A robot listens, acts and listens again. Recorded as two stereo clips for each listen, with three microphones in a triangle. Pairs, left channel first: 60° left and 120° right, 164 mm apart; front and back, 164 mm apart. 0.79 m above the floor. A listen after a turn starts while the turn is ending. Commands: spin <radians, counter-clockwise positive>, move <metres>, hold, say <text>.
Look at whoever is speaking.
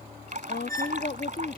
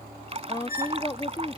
spin 1.05
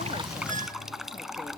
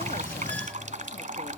hold
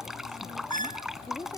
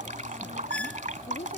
say Found it: a woman speaking, straight ahead.